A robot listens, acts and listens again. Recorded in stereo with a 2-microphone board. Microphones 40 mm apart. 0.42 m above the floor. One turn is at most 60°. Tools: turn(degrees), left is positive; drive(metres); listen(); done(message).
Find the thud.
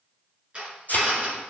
turn(degrees=45)
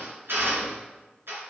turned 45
listen()
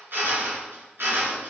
done("I heard a thud, but can't make it out now. It was about straight ahead or 90° left.")